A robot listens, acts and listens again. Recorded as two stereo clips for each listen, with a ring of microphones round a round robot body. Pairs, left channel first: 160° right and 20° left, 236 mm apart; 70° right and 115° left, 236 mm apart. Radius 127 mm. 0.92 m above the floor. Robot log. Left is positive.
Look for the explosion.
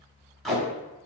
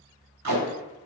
cmd idle
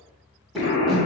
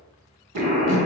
note: The explosion: 165° left.
cmd yaw +165
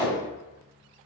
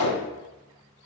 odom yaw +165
end: I heard an explosion from this way, but can't make it out now.